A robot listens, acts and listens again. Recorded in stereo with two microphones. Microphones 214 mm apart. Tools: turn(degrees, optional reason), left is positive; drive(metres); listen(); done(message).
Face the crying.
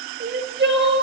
turn(degrees=-50, reason="The crying: about 50° right or 130° right.")
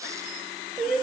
done("Found it: crying, straight ahead, 1 to 2 m away.")